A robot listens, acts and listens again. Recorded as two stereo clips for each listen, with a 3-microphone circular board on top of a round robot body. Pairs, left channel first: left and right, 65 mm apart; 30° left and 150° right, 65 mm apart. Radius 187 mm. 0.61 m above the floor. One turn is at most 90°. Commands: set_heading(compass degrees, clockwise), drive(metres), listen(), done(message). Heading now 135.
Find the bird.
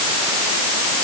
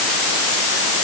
listen()
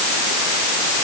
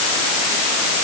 listen()
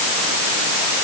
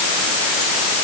done("I can't make out a bird to turn to.")